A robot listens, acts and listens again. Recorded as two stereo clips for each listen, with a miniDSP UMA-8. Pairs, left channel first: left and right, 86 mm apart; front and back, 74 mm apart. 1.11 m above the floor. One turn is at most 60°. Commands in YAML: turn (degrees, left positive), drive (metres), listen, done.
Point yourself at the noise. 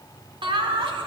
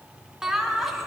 turn: -60
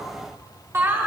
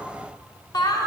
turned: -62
turn: -25
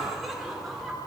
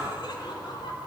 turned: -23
done: "Found it: laughter, straight ahead, 2 to 4 m away."